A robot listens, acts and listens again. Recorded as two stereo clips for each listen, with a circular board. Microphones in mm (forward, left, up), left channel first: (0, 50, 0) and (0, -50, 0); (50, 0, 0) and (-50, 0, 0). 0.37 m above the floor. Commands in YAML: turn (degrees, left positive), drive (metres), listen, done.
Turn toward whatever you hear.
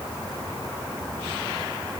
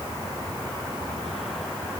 listen: true
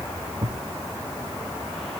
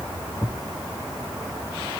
turn: -50
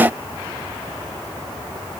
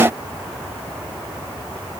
done: "Facing where the thud came from. I can't hear it now."